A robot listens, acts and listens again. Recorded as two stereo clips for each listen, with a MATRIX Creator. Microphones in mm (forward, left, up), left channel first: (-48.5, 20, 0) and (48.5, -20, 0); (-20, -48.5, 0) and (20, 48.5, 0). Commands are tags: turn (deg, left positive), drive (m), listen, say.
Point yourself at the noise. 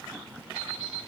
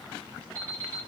<turn deg="125"/>
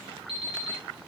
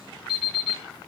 <turn deg="-15"/>
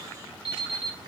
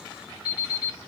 <say>Facing the alarm clock, 2 to 4 m away.</say>